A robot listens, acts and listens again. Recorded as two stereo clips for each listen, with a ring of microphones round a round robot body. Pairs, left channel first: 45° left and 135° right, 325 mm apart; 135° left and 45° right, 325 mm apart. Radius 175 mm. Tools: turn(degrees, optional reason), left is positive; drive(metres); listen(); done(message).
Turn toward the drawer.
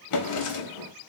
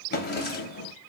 turn(degrees=75, reason="The drawer: 75° left.")
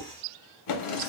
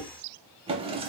turn(degrees=30, reason="The drawer is now 30° left.")
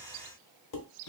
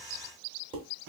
done("Found it: a drawer, straight ahead.")